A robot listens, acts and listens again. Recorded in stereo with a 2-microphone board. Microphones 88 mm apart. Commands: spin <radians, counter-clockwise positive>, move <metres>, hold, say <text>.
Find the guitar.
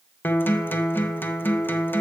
spin 0.44
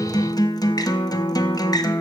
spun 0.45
spin 2.27
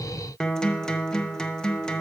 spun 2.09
spin 0.17
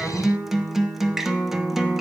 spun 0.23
say Found it: a guitar, straight ahead.